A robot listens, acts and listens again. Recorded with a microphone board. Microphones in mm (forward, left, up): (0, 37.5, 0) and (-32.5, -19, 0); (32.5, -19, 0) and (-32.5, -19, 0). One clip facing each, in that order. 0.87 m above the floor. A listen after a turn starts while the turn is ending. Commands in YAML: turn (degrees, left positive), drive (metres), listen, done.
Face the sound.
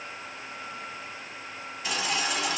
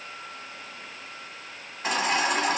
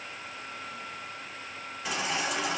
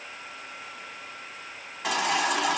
turn: -170
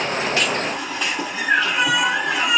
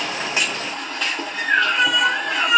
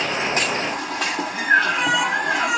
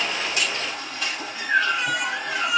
turn: -25
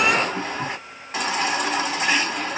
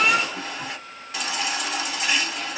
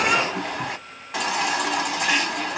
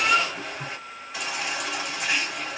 done: "Facing the baby crying."